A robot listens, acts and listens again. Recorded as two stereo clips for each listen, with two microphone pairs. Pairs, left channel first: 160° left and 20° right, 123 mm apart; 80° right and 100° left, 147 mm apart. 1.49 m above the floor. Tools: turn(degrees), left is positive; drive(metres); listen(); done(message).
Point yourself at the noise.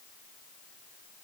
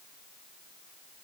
listen()
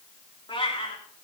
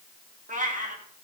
turn(degrees=120)
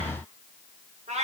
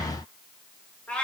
done("Found it: a cat meowing, straight ahead, 2 to 4 m away.")